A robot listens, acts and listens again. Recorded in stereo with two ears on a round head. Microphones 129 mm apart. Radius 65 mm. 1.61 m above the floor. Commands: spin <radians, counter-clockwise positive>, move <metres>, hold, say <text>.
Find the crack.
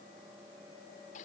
hold
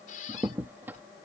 spin -0.52
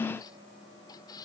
hold
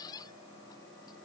say I heard a crack, but can't make it out now. It was about 15° left or 135° right.